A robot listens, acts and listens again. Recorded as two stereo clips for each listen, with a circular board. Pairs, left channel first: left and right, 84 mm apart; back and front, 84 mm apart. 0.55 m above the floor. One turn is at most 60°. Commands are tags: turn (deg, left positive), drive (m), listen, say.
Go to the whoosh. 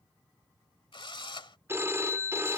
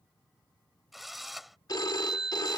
<listen/>
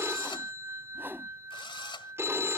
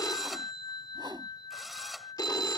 <turn deg="-25"/>
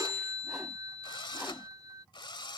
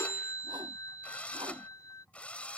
<listen/>
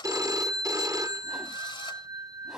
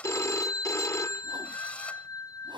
<turn deg="-10"/>
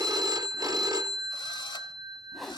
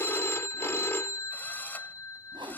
<drive m="1.0"/>
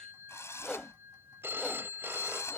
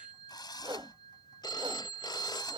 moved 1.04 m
<drive m="1.0"/>
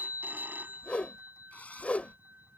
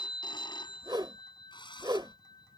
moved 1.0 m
<turn deg="15"/>
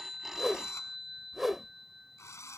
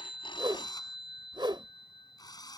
<drive m="1.0"/>
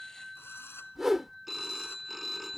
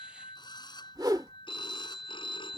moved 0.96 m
<drive m="1.0"/>
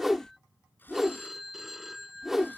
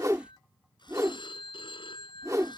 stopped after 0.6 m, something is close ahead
<say>Arrived at the whoosh, straight ahead.</say>